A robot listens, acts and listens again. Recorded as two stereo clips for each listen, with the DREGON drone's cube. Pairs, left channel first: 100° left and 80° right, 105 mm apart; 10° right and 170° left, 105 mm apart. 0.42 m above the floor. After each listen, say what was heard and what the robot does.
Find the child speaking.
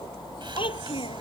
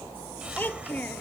The child speaking: 65° left. Turn 65° left.
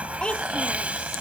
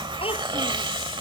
The child speaking is now 20° left. Turn 20° left.
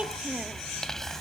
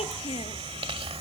Keep listening.
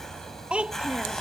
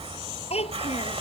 Found it: a child speaking, straight ahead.